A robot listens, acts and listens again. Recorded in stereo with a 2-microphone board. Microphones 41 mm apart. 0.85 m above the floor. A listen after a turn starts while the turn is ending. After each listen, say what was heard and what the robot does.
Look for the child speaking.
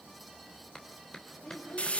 The child speaking: about 60° left or 120° left. Turn 60° left.
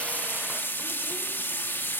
Keep listening.
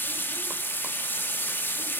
Keep listening.
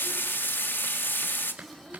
I heard a child speaking, but can't make it out now. It was about straight ahead or 60° left.